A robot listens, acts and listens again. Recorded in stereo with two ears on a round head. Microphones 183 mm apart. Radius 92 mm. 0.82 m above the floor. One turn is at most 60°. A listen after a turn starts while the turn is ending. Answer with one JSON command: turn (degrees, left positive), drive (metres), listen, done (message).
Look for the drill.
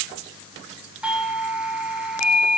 {"listen": true}
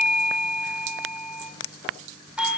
{"listen": true}
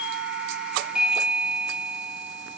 {"done": "I can't make out a drill, only a doorbell."}